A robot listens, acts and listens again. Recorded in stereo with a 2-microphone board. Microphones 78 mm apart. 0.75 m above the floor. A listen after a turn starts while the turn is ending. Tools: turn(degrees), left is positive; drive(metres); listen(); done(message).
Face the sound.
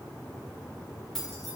turn(degrees=30)
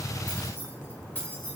turn(degrees=160)
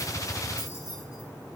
turn(degrees=50)
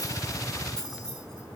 turn(degrees=10)
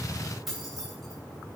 done("Found it: keys jangling, straight ahead, 2 to 4 m away.")